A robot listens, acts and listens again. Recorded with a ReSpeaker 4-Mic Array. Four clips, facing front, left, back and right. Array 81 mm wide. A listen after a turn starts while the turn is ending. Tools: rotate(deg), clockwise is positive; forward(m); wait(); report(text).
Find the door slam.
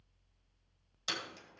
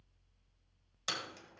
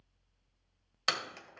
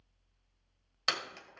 rotate(145)
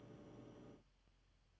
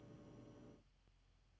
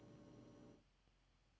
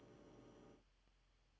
report("I heard a door slam from this way, but can't make it out now.")